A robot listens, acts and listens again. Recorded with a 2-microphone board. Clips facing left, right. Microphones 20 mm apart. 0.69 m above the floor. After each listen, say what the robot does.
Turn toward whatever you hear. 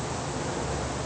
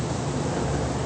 Keep listening.
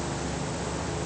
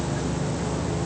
Keep listening.
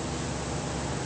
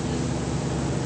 I can't make out anything.